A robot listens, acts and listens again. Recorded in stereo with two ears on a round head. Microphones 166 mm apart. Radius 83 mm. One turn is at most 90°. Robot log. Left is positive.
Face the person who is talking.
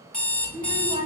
note: The child speaking: about 30° right or 150° right.
cmd yaw -30
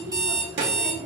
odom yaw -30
note: So it is at 115° right.
cmd yaw -90
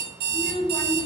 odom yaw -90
note: The child speaking is now 20° left.
cmd yaw +20
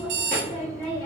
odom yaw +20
note: The child speaking is now 15° left.
cmd yaw +15
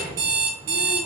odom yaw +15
end: Found it: a child speaking, straight ahead, 2 to 4 m away.